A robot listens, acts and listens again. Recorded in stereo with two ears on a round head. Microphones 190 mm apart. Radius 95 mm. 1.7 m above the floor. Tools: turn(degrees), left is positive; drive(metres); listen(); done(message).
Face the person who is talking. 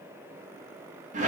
listen()
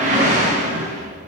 listen()
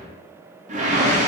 done("I can't make out anyone speaking to turn to.")